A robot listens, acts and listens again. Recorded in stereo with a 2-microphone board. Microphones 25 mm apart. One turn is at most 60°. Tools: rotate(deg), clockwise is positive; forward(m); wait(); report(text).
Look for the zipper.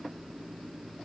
wait()
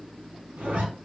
rotate(60)
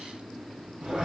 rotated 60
rotate(35)
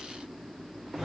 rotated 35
report("Facing the zipper.")